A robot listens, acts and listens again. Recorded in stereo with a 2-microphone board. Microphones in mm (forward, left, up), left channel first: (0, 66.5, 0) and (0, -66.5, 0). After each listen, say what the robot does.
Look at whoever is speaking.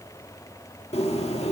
Keep listening.
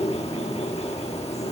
Keep listening.
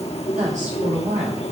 Turn 70° right.
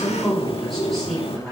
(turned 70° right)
Facing the woman speaking.